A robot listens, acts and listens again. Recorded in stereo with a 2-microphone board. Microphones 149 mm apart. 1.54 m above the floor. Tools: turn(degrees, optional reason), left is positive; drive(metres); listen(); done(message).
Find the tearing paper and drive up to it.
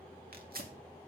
turn(degrees=-75, reason="The tearing paper: about 75° right or 105° right.")
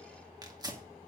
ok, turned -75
turn(degrees=-25, reason="So it is at 25° right.")
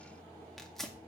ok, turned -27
drive(metres=1.0)
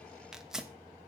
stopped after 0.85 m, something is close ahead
done("Arrived at the tearing paper, straight ahead.")